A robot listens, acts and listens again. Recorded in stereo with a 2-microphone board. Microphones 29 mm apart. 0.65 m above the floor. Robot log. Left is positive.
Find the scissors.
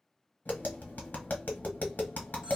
cmd idle
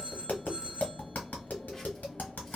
cmd idle
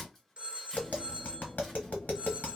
end: I can't make out scissors to turn to.